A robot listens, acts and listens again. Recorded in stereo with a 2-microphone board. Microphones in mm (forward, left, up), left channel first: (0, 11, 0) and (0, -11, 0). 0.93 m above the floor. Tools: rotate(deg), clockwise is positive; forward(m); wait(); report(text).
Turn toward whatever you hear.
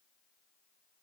wait()
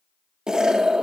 rotate(30)
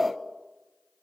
report("Found it: an explosion, straight ahead.")